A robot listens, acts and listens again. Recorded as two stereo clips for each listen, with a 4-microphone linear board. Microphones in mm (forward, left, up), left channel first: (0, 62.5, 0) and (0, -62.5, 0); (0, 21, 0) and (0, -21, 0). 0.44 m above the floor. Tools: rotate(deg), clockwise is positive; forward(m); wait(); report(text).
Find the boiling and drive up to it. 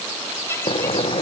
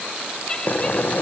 rotate(-50)
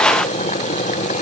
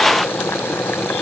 rotate(-80)
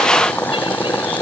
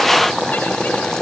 rotate(-15)
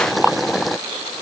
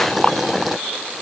forward(1.0)
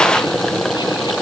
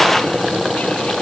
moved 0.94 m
forward(1.0)
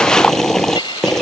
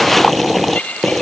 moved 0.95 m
forward(1.0)
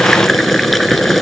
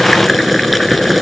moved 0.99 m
forward(1.0)
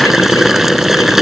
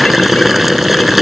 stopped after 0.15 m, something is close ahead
report("I am next to the boiling.")